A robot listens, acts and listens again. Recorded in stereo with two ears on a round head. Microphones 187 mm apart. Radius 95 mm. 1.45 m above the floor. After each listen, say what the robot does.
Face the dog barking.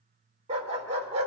Turn 30° right.
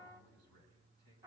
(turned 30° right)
Keep listening.
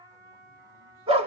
Turn 25° right.
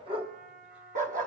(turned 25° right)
Turn 40° right.
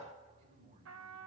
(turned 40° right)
Keep listening.
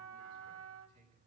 Keep listening.
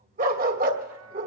Turn 40° right.
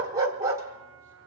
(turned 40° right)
Turn 15° right.
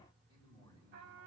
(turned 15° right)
Keep listening.
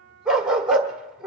Facing the dog barking, 1 to 2 m away.